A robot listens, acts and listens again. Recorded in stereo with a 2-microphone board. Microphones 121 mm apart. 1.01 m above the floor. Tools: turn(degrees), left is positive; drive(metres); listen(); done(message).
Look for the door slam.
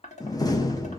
turn(degrees=30)
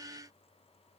listen()
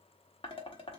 done("I heard a door slam, but can't make it out now. It was about straight ahead or 120° left.")